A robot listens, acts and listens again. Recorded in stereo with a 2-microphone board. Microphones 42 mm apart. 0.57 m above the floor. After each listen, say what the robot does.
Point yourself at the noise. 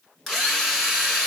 Turn 30° left.
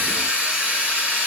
Turn 20° right.
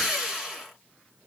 Facing the drill.